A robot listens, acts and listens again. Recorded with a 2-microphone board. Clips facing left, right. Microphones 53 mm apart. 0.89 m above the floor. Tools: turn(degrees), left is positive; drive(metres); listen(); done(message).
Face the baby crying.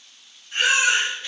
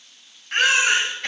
turn(degrees=-90)
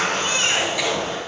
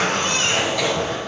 listen()
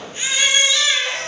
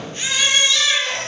turn(degrees=10)
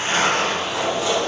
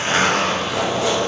listen()
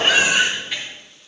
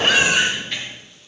done("Found it: a baby crying, straight ahead.")